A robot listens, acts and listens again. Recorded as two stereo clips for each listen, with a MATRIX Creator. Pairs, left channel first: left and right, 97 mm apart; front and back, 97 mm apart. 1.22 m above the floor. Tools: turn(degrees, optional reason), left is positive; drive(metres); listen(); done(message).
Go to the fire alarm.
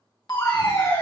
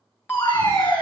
turn(degrees=70, reason="The fire alarm: 70° left.")
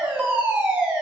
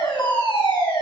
turn(degrees=-15, reason="The fire alarm is now 15° right.")
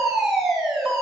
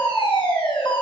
drive(metres=1.0)
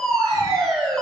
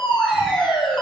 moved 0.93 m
drive(metres=1.0)
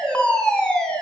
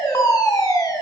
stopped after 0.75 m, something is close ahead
turn(degrees=15, reason="The fire alarm is now 15° left.")
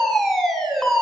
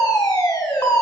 done("I am next to the fire alarm.")